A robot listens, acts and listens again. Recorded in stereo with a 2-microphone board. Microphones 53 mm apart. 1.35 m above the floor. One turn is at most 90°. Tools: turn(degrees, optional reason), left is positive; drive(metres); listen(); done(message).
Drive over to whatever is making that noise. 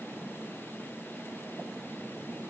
listen()
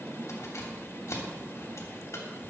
turn(degrees=65, reason="The keys jangling: about 65° left or 115° left.")
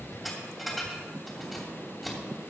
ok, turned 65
drive(metres=1.0)
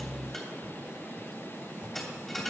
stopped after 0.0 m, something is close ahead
done("Something is in my way. I am facing the keys jangling but have not reached it.")